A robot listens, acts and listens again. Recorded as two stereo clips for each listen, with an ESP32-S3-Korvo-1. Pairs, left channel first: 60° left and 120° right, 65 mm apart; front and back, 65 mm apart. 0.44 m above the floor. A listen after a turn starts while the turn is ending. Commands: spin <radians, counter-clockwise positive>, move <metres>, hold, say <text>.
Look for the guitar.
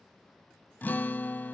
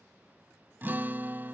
spin 2.09
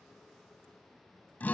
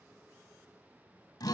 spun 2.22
say Facing the guitar.